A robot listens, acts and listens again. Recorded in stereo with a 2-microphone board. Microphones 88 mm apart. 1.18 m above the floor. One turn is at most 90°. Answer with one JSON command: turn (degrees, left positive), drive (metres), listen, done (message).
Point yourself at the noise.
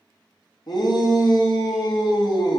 {"turn": 50}
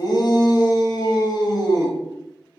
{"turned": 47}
{"turn": 60}
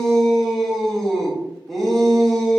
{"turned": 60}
{"done": "Facing the shout, under 1 m away."}